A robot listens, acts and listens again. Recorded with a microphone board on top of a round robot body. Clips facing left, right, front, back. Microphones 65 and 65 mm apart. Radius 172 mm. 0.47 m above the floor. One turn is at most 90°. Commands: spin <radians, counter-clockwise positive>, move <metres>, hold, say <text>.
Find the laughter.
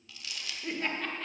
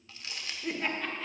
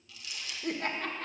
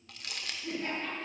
say Found it: laughter, straight ahead, 1 to 2 m away.